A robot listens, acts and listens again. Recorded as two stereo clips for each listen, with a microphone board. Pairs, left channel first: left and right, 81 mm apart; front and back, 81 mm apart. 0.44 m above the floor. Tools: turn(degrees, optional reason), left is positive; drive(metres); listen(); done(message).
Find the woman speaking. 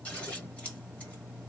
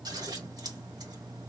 listen()
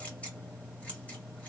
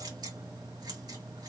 listen()
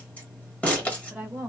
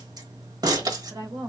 turn(degrees=-165, reason="The woman speaking: 165° right.")
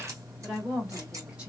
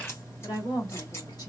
turn(degrees=-15, reason="The woman speaking is now 15° right.")
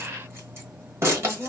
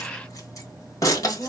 done("Facing the woman speaking.")